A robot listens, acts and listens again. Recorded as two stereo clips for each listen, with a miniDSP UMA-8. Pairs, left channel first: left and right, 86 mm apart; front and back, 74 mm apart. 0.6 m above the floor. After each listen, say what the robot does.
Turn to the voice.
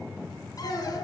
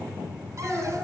Turn 90° left.
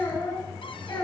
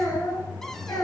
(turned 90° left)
Turn 45° left.
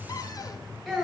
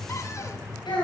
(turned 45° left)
Found it: a child speaking, straight ahead, over 4 m away.